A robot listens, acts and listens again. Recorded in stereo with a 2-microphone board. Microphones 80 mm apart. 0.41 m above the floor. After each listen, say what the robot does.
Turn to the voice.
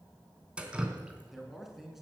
Turn 30° right.
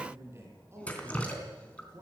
Turn 145° right.
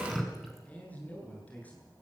Turn 20° left.
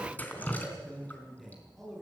Found it: a man speaking, straight ahead, over 4 m away.